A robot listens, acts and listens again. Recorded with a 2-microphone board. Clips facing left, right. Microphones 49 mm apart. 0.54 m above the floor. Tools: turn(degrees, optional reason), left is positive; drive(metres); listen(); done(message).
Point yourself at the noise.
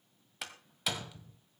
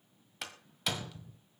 turn(degrees=30)
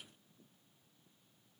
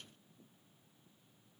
listen()
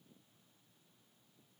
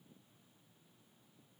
done("I heard a door slam, but can't make it out now. It was about 30° right or 150° left.")